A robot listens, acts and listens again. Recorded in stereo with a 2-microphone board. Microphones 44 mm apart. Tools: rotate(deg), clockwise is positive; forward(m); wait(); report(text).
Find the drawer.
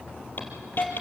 wait()
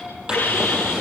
rotate(20)
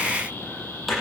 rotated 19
report("Found it: a drawer, straight ahead.")